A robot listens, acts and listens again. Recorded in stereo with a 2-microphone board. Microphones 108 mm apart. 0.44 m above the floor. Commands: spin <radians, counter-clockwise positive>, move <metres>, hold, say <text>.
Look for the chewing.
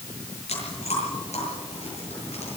spin 1.57
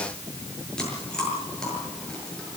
say Facing the chewing.